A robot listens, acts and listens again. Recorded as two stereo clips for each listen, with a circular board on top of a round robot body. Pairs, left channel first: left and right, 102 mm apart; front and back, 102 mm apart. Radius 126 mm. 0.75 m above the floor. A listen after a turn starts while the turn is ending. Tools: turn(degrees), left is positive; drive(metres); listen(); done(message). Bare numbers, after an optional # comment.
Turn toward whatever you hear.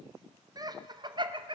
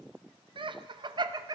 # The laughter: 130° right.
turn(-130)
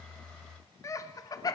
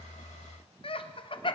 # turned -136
# The laughter is now 35° left.
turn(35)
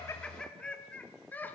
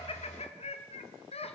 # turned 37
# The laughter is now 15° left.
turn(15)
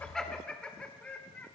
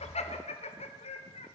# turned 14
# The laughter is now 15° left.
turn(15)
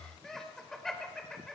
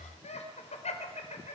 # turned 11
done("Facing the laughter.")